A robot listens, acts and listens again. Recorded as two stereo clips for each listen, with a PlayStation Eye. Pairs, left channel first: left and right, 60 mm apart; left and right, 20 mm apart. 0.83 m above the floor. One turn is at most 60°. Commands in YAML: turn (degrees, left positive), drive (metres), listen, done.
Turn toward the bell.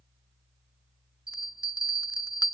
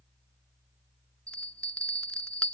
turn: 60
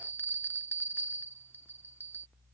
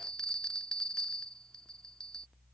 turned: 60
turn: 35
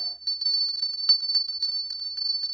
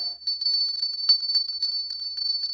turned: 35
turn: 10
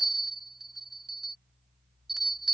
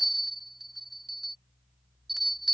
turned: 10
done: "Found it: a bell, straight ahead."